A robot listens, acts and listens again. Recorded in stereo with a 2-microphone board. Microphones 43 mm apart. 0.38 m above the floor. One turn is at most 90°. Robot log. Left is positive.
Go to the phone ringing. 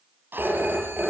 note: The phone ringing: about 45° right or 135° right.
cmd yaw -45
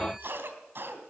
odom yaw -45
cmd idle
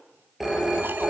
cmd fwd 1.0
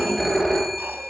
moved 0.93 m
cmd fwd 1.0
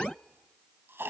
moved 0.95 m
cmd idle
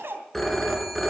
note: The phone ringing is now 10° left.
cmd yaw +10
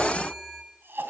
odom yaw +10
cmd fwd 1.0
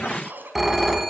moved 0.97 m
cmd fwd 1.0
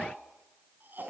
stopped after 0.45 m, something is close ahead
cmd idle
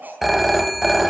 end: Arrived at the phone ringing, straight ahead.